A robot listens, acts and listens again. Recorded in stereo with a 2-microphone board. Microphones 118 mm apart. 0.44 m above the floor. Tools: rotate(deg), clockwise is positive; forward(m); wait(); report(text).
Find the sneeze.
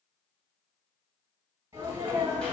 rotate(20)
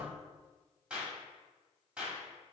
wait()
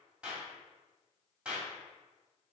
report("I heard a sneeze, but can't make it out now. It was about straight ahead or 140° right.")